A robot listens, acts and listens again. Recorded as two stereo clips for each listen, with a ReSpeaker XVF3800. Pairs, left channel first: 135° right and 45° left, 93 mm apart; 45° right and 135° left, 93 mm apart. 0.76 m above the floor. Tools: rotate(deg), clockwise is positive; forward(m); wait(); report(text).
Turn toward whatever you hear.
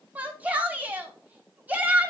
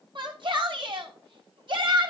rotate(-115)
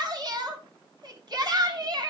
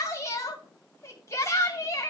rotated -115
rotate(-10)
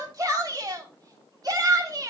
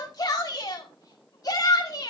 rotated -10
report("Found it: a shout, straight ahead.")